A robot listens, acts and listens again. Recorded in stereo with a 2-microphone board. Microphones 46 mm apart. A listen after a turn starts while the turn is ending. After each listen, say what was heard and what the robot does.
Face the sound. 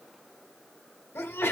The sneeze: about 65° left or 115° left. Turn 65° left.
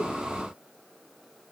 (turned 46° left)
Keep listening.
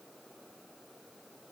I heard a sneeze, but can't make it out now. It was about 20° left or 70° left.